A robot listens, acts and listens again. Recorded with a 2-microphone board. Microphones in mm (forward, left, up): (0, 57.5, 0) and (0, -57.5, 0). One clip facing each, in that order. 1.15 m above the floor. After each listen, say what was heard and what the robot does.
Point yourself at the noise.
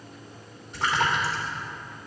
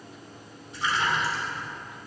The splash: about 70° left or 110° left. Turn 70° left.
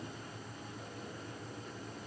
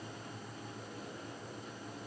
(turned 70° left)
Keep listening.
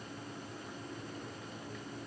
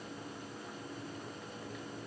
I heard a splash, but can't make it out now. It was about straight ahead or 40° left.